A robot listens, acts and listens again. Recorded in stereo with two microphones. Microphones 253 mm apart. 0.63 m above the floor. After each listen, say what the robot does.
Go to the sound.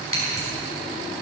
Turn 60° left.
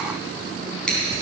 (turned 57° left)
Drive 1.0 m forward.
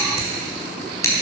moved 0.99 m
Turn 10° left.
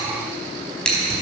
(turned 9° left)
Drive 1.0 m forward.
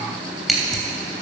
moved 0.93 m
Drive 1.0 m forward.
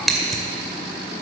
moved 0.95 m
Drive 1.0 m forward.
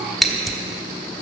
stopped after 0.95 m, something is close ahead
I am next to the scissors.